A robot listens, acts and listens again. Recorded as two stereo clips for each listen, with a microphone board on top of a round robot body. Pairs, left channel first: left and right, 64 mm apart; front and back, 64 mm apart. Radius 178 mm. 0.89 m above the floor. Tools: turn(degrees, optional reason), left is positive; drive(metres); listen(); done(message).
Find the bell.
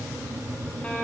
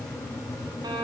listen()
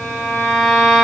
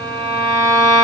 listen()
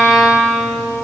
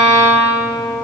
done("I can't make out a bell, only a violin.")